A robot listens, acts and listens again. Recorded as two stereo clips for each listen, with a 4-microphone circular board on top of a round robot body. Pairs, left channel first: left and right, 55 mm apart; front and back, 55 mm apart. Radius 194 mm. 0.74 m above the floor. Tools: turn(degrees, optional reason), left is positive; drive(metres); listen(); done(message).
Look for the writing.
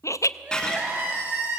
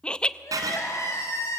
turn(degrees=170, reason="The writing: 170° left.")
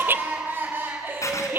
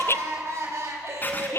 turn(degrees=60, reason="The writing is now 60° left.")
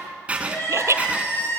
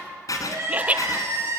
turn(degrees=-20, reason="The writing is now 20° right.")
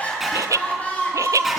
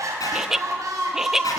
listen()
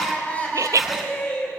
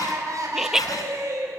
listen()
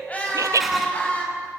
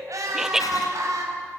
done("I heard writing from this way, but can't make it out now.")